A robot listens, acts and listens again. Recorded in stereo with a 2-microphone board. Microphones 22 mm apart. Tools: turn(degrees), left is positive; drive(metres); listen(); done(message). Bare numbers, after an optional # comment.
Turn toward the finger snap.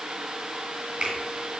# The finger snap: about 65° right or 115° right.
turn(-65)
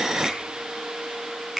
done("Facing the finger snap.")